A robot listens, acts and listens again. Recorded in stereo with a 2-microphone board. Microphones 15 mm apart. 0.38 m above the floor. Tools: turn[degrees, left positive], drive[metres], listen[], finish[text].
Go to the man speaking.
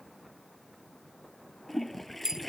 Action: listen[]
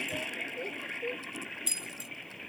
Action: listen[]
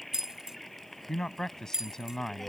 Thought: The man speaking: about 40° left or 140° left.
Action: turn[40]
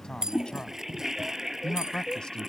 Thought: So it is at 95° left.
Action: turn[95]
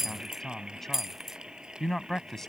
Thought: The man speaking is now 30° left.
Action: turn[30]
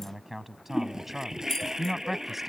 Thought: The man speaking is now 20° right.
Action: turn[-20]
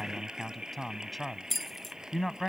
Action: drive[1.0]
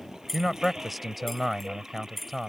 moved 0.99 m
Action: drive[1.0]
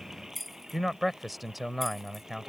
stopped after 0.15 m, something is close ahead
Thought: The man speaking is now 10° right.
Action: turn[-10]
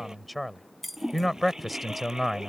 Action: finish[I am next to the man speaking.]